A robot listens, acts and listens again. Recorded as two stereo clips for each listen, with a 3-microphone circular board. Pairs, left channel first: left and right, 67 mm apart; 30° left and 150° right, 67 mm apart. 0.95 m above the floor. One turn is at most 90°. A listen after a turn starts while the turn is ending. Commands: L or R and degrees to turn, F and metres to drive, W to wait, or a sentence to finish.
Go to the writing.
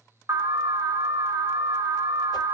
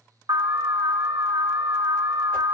W
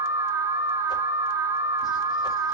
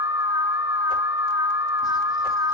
W
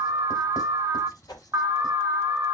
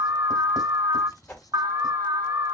I can't make out writing to turn to.